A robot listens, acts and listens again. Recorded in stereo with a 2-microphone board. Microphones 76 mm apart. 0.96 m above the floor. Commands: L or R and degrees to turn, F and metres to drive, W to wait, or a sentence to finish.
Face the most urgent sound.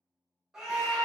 R30
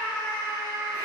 L25
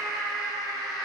Facing the scream.